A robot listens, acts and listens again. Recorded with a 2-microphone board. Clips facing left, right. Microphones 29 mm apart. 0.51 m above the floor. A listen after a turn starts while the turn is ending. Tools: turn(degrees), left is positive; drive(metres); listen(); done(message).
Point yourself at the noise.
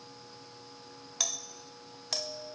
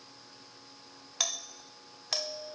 turn(degrees=-15)
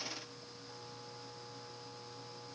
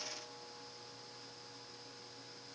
listen()
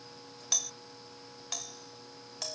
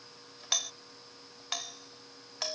turn(degrees=-150)
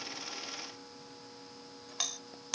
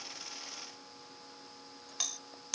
turn(degrees=15)
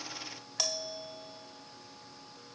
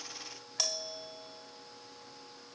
done("Facing the doorbell.")